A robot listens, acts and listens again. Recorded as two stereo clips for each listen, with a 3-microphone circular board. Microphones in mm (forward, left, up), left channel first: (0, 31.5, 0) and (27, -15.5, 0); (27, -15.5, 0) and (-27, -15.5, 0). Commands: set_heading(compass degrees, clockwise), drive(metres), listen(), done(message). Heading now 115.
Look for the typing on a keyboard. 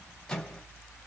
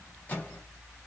listen()
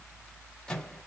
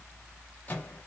listen()
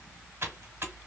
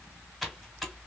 set_heading(205)
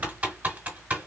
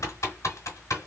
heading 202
done("Facing the typing on a keyboard.")